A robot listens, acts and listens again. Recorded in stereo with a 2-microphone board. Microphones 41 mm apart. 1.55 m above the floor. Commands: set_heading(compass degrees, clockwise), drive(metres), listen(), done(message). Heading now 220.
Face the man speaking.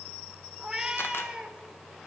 listen()
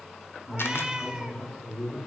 set_heading(190)
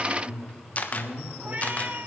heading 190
set_heading(55)
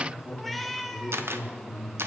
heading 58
done("Facing the man speaking, 2 to 4 m away.")